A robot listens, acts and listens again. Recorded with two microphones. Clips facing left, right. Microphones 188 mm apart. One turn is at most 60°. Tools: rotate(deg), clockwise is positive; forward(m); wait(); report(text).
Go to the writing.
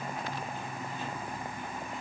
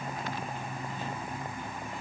wait()
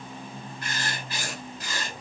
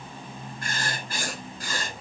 rotate(50)
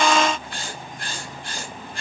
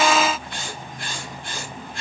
forward(1.0)
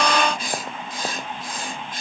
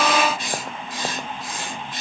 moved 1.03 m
forward(1.0)
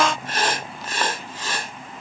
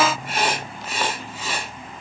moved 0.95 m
rotate(10)
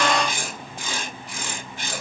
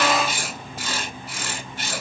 forward(1.0)
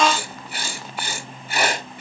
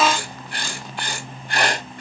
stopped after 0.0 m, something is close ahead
report("I am next to the writing.")